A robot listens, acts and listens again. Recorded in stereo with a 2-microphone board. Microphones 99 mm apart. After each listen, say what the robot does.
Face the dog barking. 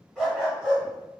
Turn 30° right.
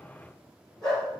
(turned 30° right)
Facing the dog barking.